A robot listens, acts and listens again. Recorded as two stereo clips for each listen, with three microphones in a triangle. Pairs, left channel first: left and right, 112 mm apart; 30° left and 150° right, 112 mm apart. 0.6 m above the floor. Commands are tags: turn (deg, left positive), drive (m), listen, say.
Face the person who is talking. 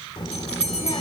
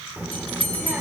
<turn deg="135"/>
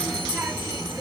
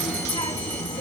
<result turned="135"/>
<turn deg="-10"/>
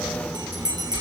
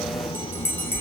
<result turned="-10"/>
<say>Facing the child speaking, under 1 m away.</say>